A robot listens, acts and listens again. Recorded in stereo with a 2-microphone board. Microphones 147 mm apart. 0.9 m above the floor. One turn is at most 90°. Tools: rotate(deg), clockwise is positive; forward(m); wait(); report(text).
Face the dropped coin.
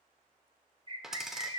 rotate(30)
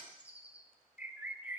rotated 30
wait()
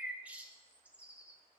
report("I heard a dropped coin, but can't make it out now. It was about 25° left or 145° right.")